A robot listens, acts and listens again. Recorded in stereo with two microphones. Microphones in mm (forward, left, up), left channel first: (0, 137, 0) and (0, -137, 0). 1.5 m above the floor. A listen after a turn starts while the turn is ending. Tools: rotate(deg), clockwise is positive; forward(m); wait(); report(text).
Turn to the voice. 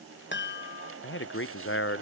rotate(-45)
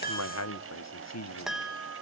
rotate(-85)
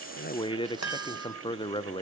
rotate(-20)
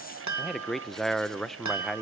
report("Found it: a man speaking, straight ahead, under 1 m away.")